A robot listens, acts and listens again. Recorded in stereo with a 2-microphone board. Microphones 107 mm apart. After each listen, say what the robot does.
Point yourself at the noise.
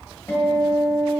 Turn 25° left.
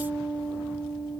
Facing the guitar, 1 to 2 m away.